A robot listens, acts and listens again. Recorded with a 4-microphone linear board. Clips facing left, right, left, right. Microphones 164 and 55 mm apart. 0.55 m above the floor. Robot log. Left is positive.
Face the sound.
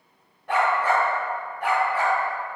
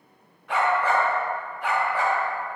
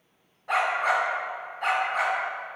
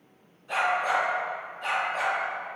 cmd yaw +90
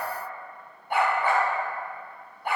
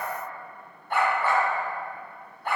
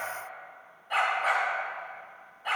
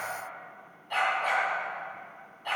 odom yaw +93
note: So it is at 10° left.
cmd yaw +10
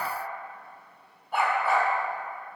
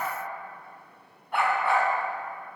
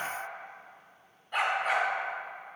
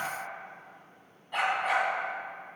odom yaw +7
end: Found it: a dog barking, straight ahead, 1 to 2 m away.